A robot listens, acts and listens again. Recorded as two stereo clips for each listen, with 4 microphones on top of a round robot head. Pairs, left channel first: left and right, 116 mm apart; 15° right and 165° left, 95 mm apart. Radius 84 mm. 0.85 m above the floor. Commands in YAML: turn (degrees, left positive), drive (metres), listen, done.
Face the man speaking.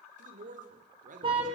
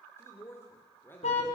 turn: -85
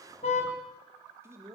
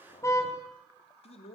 turn: -20
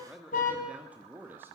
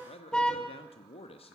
turn: -20
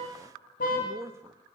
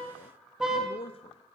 turn: -20
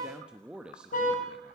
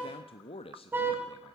turn: -10
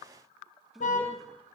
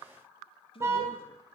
done: "Found it: a man speaking, straight ahead."